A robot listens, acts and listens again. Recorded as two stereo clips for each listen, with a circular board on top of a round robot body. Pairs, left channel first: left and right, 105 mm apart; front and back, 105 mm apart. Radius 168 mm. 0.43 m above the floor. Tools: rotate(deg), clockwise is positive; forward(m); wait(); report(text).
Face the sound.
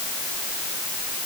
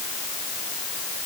wait()
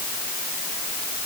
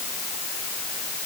wait()
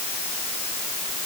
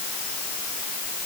report("I can't make out anything.")